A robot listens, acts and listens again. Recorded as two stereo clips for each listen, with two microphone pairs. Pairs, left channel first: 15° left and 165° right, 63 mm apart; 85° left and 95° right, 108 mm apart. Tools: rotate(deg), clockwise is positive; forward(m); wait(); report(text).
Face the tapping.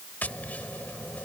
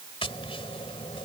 rotate(-80)
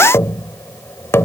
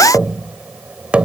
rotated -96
rotate(20)
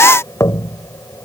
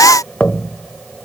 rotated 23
report("Found it: tapping, straight ahead.")